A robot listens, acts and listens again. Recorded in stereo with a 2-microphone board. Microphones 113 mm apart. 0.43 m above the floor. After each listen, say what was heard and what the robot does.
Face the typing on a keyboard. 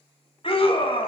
Keep listening.
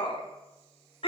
Keep listening.
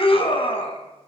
I can't make out typing on a keyboard, only a scream.